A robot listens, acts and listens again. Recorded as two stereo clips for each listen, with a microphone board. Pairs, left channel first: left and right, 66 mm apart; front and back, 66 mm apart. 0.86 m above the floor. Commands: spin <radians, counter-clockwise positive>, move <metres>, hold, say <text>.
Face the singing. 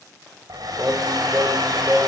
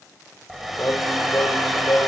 spin -0.61
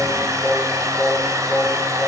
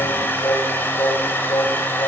spin 0.26
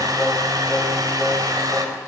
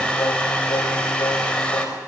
say Found it: singing, straight ahead.